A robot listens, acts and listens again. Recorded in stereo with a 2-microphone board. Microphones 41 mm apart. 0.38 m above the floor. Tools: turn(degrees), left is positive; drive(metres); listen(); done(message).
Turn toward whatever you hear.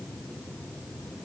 listen()
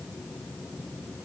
listen()
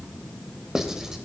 turn(degrees=-30)
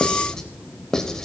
turn(degrees=15)
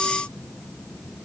done("Found it: writing, straight ahead.")